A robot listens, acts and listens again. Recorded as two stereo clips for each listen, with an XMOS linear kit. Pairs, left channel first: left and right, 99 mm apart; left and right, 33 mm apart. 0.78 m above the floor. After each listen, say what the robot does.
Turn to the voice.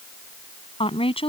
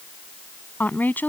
Turn 90° left.
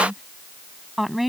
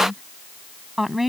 Found it: a woman speaking, straight ahead.